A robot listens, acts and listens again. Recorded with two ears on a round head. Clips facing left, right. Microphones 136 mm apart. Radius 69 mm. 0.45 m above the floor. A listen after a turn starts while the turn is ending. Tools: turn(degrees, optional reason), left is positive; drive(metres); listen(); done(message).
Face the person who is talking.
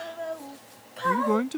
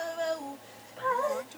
turn(degrees=75, reason="The man speaking: about 75° left or 105° left.")
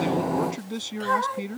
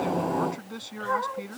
turn(degrees=25, reason="So it is at 25° left.")
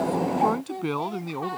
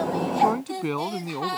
done("Found it: a man speaking, straight ahead.")